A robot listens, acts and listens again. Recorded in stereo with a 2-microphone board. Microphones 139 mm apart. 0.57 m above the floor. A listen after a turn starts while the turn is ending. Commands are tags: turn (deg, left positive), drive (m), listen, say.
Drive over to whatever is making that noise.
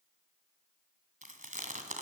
<turn deg="-65"/>
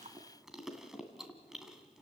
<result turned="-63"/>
<drive m="1.0"/>
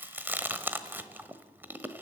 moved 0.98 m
<turn deg="-15"/>
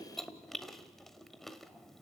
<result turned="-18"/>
<drive m="1.0"/>
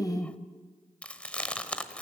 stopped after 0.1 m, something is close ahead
<turn deg="10"/>
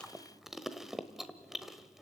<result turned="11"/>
<say>Arrived at the chewing, straight ahead.</say>